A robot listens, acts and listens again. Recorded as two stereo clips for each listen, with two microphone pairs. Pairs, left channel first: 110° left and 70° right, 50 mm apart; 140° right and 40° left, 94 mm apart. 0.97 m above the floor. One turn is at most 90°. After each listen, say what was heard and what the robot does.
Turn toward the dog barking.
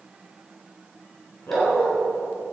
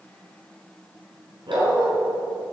The dog barking: 80° left. Turn 80° left.
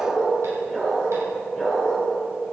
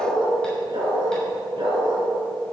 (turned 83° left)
The dog barking is now 10° left. Turn 10° left.
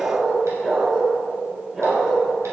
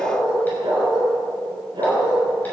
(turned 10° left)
Facing the dog barking, over 4 m away.